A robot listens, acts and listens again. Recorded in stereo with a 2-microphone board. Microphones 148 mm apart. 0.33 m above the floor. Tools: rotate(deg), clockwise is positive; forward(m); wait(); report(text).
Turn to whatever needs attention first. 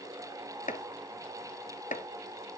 wait()
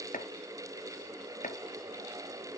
wait()
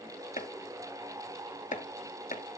report("I can't make out anything urgent, only chopping.")